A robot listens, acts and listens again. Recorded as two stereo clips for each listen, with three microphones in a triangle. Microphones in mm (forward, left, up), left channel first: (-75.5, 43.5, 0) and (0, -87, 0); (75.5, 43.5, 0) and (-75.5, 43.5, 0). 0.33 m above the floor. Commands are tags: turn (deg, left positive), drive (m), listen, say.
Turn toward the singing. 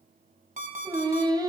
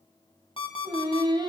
<turn deg="-125"/>
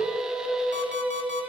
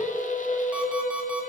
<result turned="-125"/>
<turn deg="25"/>
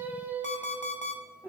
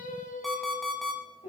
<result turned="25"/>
<turn deg="15"/>
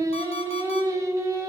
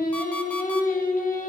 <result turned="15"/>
<say>Found it: singing, straight ahead.</say>